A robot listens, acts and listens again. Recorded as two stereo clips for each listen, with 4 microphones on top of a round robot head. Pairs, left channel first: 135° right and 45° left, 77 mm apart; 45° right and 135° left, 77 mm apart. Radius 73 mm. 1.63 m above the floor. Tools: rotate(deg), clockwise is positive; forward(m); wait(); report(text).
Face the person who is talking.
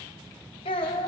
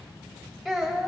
rotate(135)
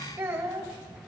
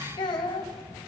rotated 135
rotate(10)
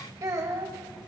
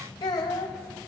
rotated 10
report("Found it: a child speaking, straight ahead.")